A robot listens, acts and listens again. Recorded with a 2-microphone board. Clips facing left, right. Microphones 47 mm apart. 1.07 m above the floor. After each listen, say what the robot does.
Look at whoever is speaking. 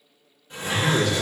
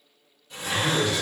Turn 65° left.
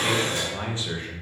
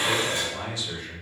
Turn 35° left.
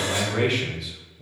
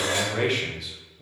Found it: a man speaking, straight ahead.